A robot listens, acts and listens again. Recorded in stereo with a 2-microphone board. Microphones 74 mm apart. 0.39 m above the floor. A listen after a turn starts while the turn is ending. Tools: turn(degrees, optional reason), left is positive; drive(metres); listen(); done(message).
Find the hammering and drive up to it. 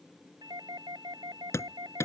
turn(degrees=40, reason="The hammering: about 40° left or 140° left.")
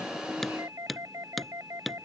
drive(metres=1.0)
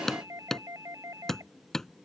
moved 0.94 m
drive(metres=1.0)
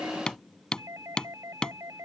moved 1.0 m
turn(degrees=10, reason="The hammering is now 10° left.")
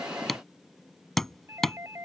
drive(metres=1.0)
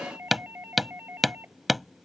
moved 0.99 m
drive(metres=1.0)
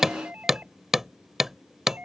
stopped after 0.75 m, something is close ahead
done("I am next to the hammering.")